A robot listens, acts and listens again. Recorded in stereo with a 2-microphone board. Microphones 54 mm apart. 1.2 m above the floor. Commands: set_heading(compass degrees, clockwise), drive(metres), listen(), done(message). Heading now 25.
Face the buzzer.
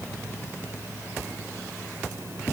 listen()
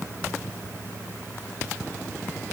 listen()
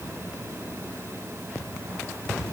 done("I can't make out a buzzer.")